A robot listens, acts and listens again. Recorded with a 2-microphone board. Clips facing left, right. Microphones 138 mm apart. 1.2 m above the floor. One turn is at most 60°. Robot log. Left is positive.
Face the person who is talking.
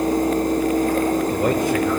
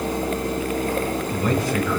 note: The man speaking: about 55° left or 125° left.
cmd yaw +55
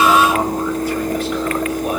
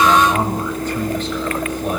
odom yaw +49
cmd idle
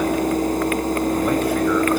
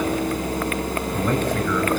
cmd idle
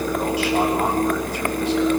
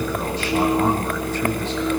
end: I heard a man speaking, but can't make it out now. It was about 5° left or 75° left.